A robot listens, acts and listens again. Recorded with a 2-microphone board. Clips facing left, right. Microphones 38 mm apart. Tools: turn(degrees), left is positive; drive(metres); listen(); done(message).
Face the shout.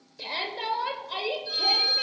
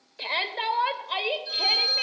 turn(degrees=-35)
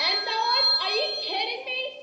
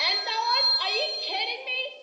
turn(degrees=-10)
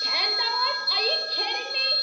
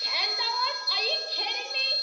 done("Found it: a shout, straight ahead.")